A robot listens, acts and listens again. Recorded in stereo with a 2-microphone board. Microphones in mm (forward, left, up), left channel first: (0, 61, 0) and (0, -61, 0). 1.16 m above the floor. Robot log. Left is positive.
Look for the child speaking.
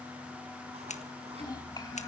note: The child speaking: about 35° left or 145° left.
cmd yaw +35
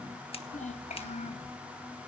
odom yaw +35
note: So it is at 105° left.
cmd yaw +105
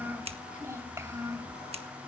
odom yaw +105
note: The child speaking is now 25° right.
cmd yaw -25
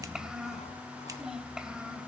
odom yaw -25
end: Found it: a child speaking, straight ahead, 2 to 4 m away.